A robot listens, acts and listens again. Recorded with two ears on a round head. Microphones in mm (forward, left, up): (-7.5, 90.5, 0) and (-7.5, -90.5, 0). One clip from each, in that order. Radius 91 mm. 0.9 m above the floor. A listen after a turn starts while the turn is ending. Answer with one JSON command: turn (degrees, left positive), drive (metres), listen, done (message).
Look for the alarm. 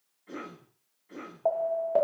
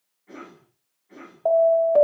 {"turn": -30}
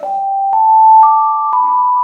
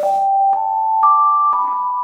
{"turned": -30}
{"turn": 20}
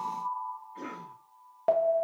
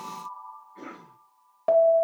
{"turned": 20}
{"done": "Found it: an alarm, straight ahead, under 1 m away."}